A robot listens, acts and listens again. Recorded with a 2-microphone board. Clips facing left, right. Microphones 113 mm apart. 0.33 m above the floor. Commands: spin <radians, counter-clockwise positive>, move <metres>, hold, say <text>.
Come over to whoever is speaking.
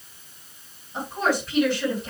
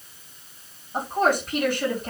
spin -0.79
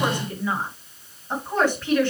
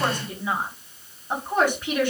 spin -0.26
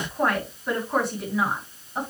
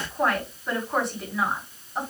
move 1.0
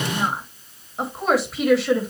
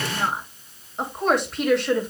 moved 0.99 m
move 1.0
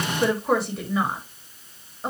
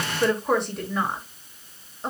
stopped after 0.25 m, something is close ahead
say Arrived at the woman speaking, straight ahead.